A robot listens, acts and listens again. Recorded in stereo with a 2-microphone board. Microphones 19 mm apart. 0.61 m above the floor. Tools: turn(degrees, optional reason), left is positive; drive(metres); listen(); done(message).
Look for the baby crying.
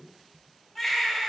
turn(degrees=30)
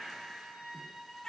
turn(degrees=150, reason="So it is at 150° left.")
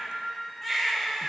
turn(degrees=15, reason="The baby crying is now 15° left.")
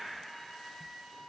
listen()
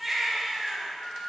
done("Facing the baby crying.")